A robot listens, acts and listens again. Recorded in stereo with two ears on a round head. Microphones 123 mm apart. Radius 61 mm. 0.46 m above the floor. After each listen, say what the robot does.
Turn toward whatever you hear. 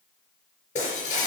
Turn 55° left.
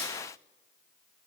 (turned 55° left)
Keep listening.
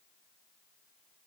I heard breaking glass, but can't make it out now. It was about straight ahead or 70° left.